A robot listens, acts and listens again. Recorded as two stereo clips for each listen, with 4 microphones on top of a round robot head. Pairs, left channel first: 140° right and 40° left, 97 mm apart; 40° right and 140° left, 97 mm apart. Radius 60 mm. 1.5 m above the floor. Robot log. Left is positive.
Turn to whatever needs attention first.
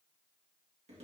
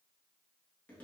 cmd idle
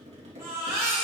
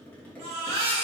note: The baby crying: 110° left.
cmd yaw +110
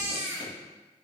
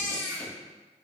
note: The baby crying is now 20° right.
cmd yaw -20
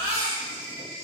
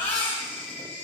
end: Facing the baby crying.